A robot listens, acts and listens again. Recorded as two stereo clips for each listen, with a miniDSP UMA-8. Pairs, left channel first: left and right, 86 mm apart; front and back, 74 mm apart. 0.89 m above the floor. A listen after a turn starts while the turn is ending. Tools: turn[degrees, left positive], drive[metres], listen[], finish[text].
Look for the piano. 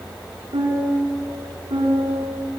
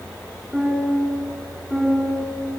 Thought: The piano: 90° right.
Action: turn[-90]
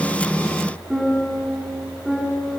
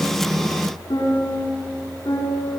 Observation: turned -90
Action: finish[Facing the piano.]